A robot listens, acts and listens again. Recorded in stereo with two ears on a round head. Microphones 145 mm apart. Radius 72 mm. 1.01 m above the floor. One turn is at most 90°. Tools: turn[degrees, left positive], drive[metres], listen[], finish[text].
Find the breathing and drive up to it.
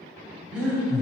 Action: turn[-30]
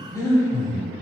Thought: So it is at 20° left.
Action: turn[20]
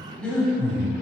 Thought: The breathing is now 10° left.
Action: turn[10]
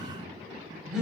Action: drive[1.0]
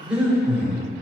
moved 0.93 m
Action: drive[1.0]
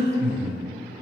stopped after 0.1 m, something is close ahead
Action: finish[I am next to the breathing.]